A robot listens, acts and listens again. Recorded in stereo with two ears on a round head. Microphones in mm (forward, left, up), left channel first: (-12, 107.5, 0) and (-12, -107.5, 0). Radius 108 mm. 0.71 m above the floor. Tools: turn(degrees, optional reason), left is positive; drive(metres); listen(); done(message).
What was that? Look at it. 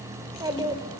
turn(degrees=-20, reason="The child speaking: about 20° right or 160° right.")
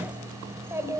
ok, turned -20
turn(degrees=-30)
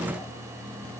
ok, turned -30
listen()
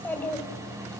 done("Facing the child speaking.")